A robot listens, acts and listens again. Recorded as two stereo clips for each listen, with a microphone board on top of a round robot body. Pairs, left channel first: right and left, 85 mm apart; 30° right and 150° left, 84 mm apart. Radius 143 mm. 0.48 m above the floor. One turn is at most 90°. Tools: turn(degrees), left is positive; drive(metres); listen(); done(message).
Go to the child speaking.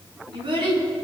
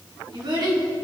turn(degrees=90)
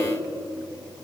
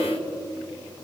turn(degrees=25)
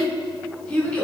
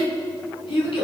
turn(degrees=-15)
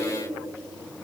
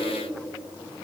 listen()
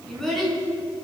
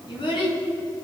drive(metres=1.0)
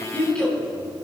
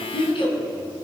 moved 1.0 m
turn(degrees=-10)
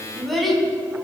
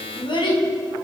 drive(metres=1.0)
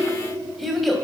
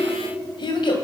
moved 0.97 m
drive(metres=1.0)
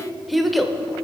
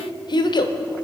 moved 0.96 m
drive(metres=1.0)
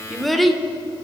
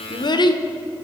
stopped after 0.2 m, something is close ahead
done("Arrived at the child speaking, straight ahead.")